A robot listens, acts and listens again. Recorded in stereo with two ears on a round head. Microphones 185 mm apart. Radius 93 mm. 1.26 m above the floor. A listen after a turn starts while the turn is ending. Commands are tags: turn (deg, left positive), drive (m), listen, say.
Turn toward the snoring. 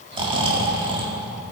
<turn deg="-25"/>
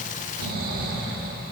<turn deg="-130"/>
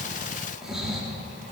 <say>Facing the snoring.</say>